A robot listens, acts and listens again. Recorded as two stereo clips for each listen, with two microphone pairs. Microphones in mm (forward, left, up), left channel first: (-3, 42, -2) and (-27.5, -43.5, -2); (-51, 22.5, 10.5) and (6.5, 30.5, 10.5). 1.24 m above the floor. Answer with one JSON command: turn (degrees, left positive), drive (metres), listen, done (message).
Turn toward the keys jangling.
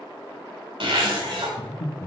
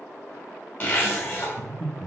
{"listen": true}
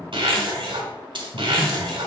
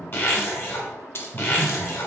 {"turn": -135}
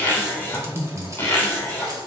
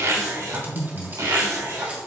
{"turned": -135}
{"listen": true}
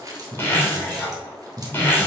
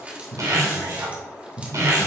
{"turn": -60}
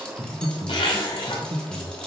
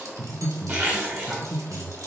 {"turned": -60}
{"listen": true}
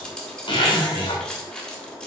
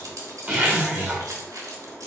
{"done": "Found it: keys jangling, straight ahead, 2 to 4 m away."}